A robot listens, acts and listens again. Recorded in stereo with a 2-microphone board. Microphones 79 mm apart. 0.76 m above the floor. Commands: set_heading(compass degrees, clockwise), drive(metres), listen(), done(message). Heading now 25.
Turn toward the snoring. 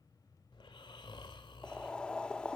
set_heading(295)
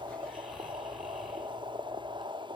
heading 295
listen()
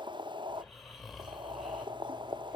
done("Facing the snoring.")